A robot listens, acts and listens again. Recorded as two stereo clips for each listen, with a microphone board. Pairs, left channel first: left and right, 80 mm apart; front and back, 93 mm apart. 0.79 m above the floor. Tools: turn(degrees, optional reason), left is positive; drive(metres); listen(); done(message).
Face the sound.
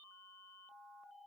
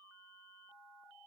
listen()
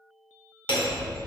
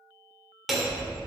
turn(degrees=90, reason="The hammering: 90° left.")
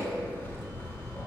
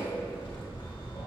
turn(degrees=25, reason="The hammering is now 25° left.")
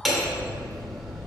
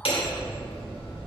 done("Facing the hammering, 1 to 2 m away.")